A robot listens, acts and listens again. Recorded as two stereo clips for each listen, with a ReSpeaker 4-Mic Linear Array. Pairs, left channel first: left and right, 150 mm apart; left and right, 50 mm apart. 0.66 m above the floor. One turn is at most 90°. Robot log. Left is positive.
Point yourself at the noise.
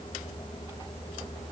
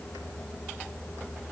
cmd idle
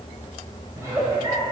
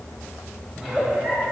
note: The giggle: about 20° right or 160° right.
cmd yaw -20
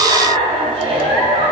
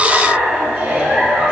note: So it is at 140° right.
cmd yaw -90
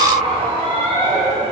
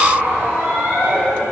note: The giggle is now 45° right.
cmd yaw -45
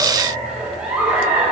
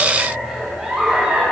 end: Found it: a giggle, straight ahead, 2 to 4 m away.